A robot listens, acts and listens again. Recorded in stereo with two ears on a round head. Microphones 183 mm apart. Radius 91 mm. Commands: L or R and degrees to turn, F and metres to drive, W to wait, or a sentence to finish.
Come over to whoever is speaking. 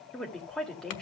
L30
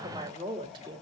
R25
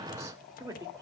R15
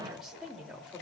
F1.0
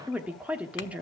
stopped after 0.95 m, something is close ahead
R10
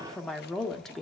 I am next to the woman speaking.